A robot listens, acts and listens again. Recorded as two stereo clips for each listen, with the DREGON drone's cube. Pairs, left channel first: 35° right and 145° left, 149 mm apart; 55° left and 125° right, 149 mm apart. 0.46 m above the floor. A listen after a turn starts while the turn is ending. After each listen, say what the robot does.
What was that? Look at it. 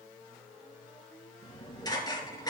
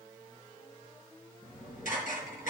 Turn 30° left.
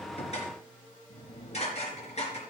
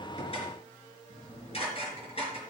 Turn 10° left.
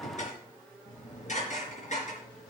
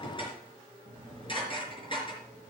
Facing the dishes clattering.